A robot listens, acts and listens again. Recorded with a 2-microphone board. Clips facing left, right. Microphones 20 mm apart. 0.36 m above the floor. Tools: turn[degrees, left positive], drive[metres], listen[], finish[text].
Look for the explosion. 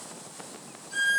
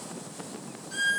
Action: listen[]
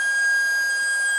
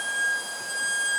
Action: listen[]
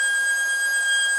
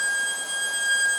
Action: finish[I can't make out an explosion, only a violin.]